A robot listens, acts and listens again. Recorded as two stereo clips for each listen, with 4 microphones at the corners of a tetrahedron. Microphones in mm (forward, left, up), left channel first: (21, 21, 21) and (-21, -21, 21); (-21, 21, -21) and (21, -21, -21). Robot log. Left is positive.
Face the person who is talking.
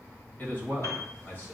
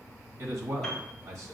note: The man speaking: 15° right.
cmd yaw -15
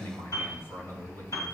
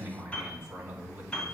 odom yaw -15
end: Found it: a man speaking, straight ahead.